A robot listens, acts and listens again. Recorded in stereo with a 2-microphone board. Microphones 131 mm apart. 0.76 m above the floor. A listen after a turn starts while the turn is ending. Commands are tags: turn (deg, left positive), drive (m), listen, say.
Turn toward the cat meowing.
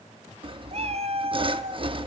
<turn deg="-40"/>
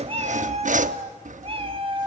<turn deg="-40"/>
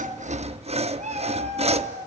<turn deg="-120"/>
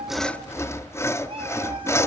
<turn deg="-45"/>
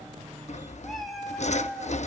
<say>Found it: a cat meowing, straight ahead, 2 to 4 m away.</say>